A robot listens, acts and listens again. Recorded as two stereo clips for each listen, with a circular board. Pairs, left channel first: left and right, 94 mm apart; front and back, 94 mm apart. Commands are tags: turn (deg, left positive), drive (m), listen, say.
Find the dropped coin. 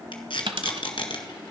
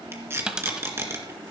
<turn deg="-100"/>
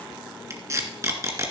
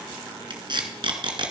<say>I heard a dropped coin from this way, but can't make it out now.</say>